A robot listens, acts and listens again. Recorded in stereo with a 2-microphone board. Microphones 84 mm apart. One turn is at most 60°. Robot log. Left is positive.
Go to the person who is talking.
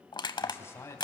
note: The man speaking: about 30° left or 150° left.
cmd yaw +30
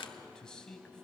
note: So it is at 10° left.
cmd yaw +10
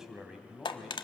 cmd fwd 1.0
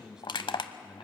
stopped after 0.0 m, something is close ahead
note: The man speaking is now 10° right.
cmd yaw -10
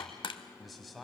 end: Blocked. The man speaking is further on, straight ahead.